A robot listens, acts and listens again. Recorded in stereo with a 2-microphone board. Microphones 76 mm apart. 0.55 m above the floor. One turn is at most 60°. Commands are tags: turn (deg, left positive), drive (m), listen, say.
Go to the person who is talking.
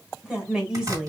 <turn deg="-30"/>
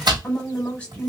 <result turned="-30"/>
<turn deg="20"/>
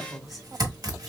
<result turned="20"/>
<drive m="1.0"/>
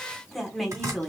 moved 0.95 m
<drive m="1.0"/>
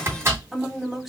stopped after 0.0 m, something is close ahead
<say>I am next to the woman speaking.</say>